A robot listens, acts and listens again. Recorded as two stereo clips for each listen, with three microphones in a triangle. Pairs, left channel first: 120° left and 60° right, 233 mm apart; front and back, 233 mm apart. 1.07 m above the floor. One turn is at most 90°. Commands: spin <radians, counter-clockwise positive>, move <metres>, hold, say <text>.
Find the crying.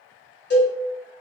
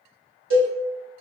hold
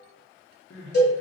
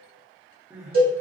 spin 1.57
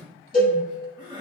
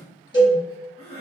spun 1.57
spin 0.17
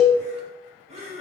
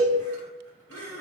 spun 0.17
say Facing the crying.